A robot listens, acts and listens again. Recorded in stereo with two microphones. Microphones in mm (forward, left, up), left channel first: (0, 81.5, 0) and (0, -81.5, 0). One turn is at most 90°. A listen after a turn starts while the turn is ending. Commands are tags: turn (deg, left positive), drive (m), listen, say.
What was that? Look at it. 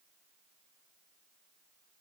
<listen/>
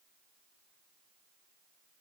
<listen/>
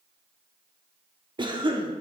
<turn deg="-30"/>
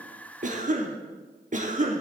<turn deg="-90"/>
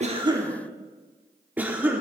<turn deg="-10"/>
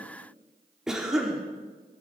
<say>Facing the cough.</say>